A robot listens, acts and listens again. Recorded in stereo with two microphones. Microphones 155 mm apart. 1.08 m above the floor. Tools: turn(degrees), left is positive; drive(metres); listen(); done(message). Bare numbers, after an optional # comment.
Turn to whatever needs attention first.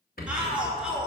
turn(-30)
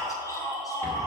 # So it is at 25° left.
turn(25)
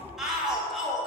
done("Found it: a shout, straight ahead.")